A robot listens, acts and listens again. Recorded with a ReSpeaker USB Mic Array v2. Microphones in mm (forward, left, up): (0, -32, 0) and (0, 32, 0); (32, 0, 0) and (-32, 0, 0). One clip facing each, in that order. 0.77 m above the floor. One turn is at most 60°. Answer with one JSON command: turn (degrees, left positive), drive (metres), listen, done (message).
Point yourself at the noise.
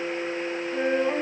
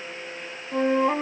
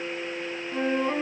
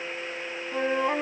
{"turn": 60}
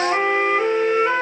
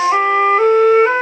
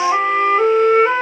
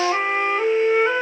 {"turn": 40}
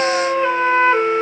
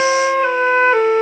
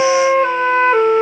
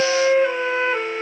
{"done": "Found it: a flute, straight ahead, 1 to 2 m away."}